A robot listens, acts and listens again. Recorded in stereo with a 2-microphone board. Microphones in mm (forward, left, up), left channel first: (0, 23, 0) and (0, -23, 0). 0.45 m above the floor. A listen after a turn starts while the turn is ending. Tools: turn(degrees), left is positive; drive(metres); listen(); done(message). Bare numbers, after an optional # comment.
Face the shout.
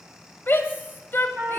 # The shout: about 45° left or 135° left.
turn(45)
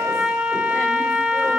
listen()
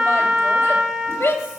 # So it is at 85° left.
turn(85)
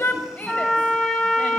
# The shout is now 40° left.
turn(40)
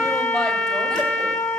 listen()
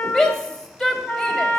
# The shout is now 15° left.
turn(15)
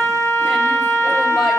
listen()
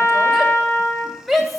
done("Found it: a shout, straight ahead.")